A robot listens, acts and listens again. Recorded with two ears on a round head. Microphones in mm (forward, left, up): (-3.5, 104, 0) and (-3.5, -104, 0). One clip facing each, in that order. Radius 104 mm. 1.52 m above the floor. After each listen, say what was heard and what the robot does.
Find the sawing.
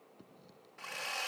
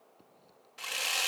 The sawing: about 50° right or 130° right. Turn 50° right.
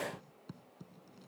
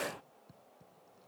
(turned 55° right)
Keep listening.
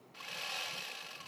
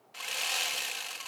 So it is at 75° right. Turn 75° right.
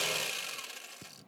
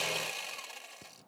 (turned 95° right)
The sawing is now 20° left. Turn 20° left.
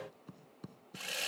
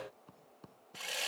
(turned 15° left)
Facing the sawing.